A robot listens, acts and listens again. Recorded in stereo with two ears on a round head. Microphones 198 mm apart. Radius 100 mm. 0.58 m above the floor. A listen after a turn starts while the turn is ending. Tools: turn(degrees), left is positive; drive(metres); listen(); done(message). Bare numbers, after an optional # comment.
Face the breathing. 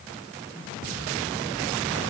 listen()
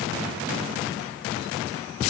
listen()
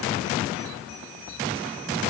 done("I can't make out breathing.")